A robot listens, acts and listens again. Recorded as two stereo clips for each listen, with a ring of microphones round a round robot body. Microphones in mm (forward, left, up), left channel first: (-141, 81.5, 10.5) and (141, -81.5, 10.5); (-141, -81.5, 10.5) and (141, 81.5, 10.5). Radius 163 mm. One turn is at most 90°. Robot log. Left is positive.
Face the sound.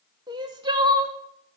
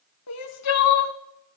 note: The crying: 105° right.
cmd yaw -90
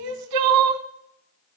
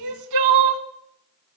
end: Facing the crying.